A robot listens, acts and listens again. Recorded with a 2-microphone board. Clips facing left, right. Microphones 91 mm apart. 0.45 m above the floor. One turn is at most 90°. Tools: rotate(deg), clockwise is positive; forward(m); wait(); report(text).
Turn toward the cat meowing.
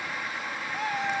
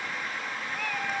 rotate(-20)
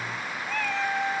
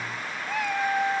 rotate(20)
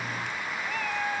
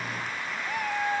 rotate(20)
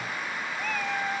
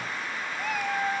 rotate(15)
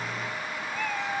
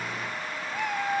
rotate(15)
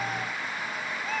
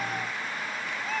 report("Facing the cat meowing, 1 to 2 m away.")